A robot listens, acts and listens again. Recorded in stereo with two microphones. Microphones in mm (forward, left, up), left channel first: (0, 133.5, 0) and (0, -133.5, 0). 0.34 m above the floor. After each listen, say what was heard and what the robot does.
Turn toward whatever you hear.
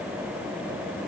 Keep listening.
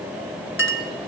The clink: about 50° left or 130° left. Turn 50° left.
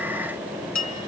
So it is at 80° left. Turn 80° left.
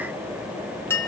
The clink is now 10° left. Turn 10° left.
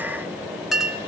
Facing the clink.